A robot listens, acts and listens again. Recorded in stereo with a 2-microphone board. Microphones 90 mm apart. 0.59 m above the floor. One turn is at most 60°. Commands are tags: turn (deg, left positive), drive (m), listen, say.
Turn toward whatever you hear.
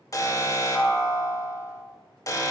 <turn deg="40"/>
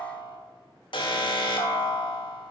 <turn deg="60"/>
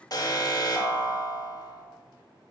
<turn deg="50"/>
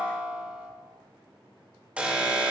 <turn deg="-15"/>
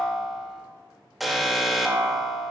<say>Facing the alarm, 1 to 2 m away.</say>